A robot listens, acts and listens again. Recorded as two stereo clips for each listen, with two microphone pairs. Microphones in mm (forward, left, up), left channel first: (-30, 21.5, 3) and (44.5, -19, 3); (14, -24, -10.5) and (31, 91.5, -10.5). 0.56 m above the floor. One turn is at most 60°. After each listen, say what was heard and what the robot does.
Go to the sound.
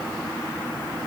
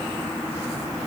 Keep listening.
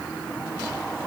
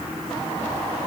Keep listening.
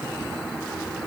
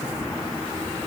I can't make out anything to turn to.